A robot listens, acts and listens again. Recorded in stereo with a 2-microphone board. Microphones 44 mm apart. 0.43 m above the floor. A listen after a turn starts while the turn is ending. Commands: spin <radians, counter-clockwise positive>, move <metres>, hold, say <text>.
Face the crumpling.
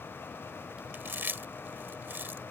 hold
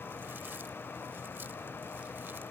hold
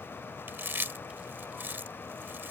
say I can't make out crumpling to turn to.